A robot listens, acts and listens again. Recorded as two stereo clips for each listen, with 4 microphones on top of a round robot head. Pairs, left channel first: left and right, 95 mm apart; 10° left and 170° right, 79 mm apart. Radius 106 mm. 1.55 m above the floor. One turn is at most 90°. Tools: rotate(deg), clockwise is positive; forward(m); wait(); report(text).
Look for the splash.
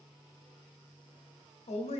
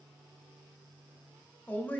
wait()
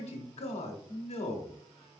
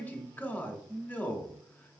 wait()
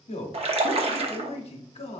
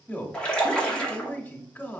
rotate(70)
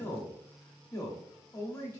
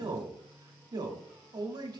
report("I heard a splash from this way, but can't make it out now.")